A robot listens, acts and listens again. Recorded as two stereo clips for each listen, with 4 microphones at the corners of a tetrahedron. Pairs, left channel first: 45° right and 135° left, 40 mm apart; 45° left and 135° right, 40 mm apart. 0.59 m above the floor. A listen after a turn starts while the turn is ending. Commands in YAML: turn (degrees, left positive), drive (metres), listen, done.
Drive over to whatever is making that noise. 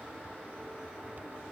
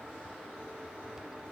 listen: true
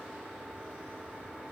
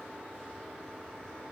listen: true
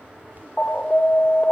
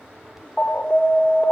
turn: -10
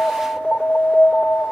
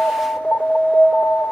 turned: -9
drive: 1.0
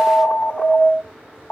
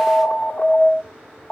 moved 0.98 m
drive: 1.0
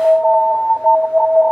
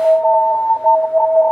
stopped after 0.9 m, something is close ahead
done: "Arrived at the alarm, straight ahead."